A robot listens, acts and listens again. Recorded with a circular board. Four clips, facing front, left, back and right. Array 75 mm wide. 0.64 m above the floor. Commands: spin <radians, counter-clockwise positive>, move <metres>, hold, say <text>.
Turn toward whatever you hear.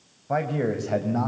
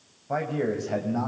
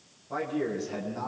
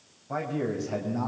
spin 0.35
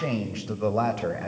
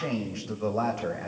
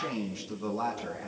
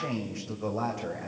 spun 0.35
spin 0.26
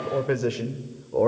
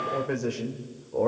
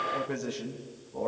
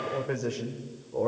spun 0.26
spin 0.17
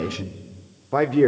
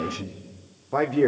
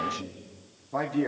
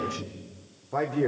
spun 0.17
spin 0.44
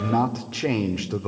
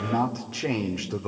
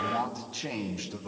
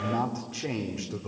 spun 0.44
spin 0.52
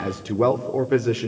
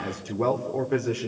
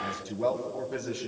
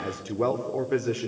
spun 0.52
say Facing the man speaking.